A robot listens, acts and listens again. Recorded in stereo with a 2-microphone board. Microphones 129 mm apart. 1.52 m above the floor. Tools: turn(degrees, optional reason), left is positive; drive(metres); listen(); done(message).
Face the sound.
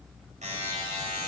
turn(degrees=-65, reason="The buzzer: about 65° right or 115° right.")
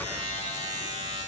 turn(degrees=-45, reason="So it is at 45° right.")
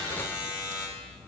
turn(degrees=20, reason="The buzzer is now 20° left.")
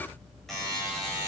done("Found it: a buzzer, straight ahead, over 4 m away.")